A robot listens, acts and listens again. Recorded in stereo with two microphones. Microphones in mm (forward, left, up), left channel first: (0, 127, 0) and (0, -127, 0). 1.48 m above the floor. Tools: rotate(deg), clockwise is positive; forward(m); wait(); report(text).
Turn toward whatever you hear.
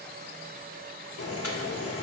rotate(-65)
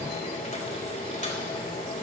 rotate(-35)
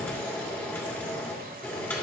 rotate(-10)
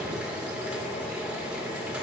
report("Facing the boiling.")